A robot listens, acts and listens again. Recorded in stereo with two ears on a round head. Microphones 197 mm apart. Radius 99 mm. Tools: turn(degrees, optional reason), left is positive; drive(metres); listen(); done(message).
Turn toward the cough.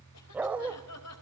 turn(degrees=90)
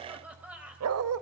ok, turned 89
done("Facing the cough.")